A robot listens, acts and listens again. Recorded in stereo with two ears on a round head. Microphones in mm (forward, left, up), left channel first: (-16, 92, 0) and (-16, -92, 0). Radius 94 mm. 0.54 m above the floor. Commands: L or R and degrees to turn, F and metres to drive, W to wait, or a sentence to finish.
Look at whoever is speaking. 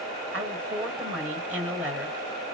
R30
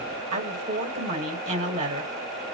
R140
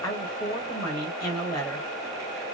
L20
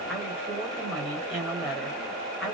Facing the woman speaking.